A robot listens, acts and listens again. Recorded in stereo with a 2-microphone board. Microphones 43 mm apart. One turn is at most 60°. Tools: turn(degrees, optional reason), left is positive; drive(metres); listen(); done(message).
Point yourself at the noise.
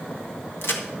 turn(degrees=60, reason="The crack: about 60° left or 120° left.")
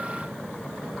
listen()
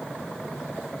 done("I heard a crack, but can't make it out now. It was about straight ahead or 60° left.")